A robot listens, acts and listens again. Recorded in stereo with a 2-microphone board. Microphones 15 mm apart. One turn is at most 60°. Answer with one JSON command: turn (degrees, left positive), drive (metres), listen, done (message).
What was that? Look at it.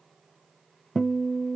{"turn": 30}
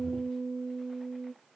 {"turn": 10}
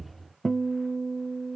{"done": "Facing the guitar, under 1 m away."}